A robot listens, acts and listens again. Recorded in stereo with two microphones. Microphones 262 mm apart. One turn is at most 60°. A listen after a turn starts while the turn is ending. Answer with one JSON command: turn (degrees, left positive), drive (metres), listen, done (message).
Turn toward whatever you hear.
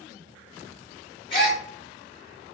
{"turn": 20}
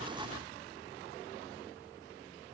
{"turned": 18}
{"listen": true}
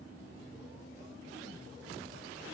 {"done": "I heard a gasp, but can't make it out now. It was about straight ahead or 145° left."}